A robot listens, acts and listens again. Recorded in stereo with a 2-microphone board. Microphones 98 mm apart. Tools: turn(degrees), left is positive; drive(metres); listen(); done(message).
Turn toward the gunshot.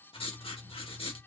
listen()
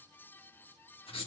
listen()
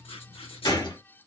turn(degrees=45)
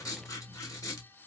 listen()
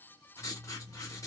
done("I heard a gunshot, but can't make it out now. It was about straight ahead or 90° left.")